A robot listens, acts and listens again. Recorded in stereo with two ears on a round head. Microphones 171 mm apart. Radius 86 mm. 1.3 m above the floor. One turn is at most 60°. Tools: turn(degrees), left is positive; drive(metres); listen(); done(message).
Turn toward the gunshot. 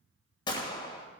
turn(degrees=25)
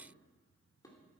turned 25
listen()
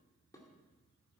done("I heard a gunshot, but can't make it out now. It was about straight ahead or 130° left.")